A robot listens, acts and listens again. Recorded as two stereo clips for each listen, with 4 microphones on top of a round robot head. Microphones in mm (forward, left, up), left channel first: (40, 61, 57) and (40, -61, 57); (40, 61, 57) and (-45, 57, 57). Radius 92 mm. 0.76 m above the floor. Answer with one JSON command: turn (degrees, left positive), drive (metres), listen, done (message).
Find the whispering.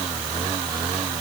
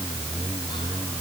{"listen": true}
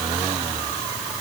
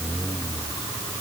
{"listen": true}
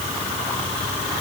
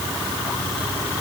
{"done": "I can't make out whispering."}